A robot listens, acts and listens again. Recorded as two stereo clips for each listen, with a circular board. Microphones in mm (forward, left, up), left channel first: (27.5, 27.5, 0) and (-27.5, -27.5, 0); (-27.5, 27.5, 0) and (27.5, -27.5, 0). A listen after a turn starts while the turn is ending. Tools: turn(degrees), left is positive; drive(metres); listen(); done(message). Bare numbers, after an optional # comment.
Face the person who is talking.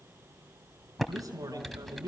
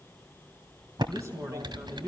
# The man speaking: 90° right.
turn(-90)
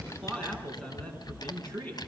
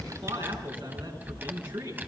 # The man speaking is now 30° right.
turn(-30)
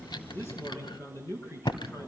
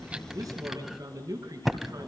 done("Found it: a man speaking, straight ahead, over 4 m away.")